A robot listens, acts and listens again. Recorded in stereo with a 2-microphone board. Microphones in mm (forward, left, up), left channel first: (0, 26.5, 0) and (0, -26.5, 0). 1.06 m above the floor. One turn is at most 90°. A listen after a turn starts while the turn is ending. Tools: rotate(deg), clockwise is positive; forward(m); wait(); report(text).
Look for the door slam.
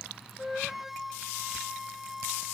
wait()
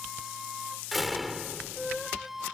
rotate(30)
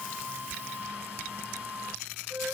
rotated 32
wait()
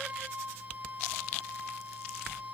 report("I heard a door slam, but can't make it out now. It was about 30° left or 145° right.")